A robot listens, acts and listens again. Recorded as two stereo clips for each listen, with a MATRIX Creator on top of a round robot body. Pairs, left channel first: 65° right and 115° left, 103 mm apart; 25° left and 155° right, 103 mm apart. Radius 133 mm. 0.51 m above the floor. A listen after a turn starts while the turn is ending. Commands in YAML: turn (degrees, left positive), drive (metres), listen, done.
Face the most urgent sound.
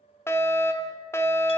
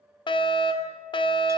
done: "Found it: a fire alarm, straight ahead."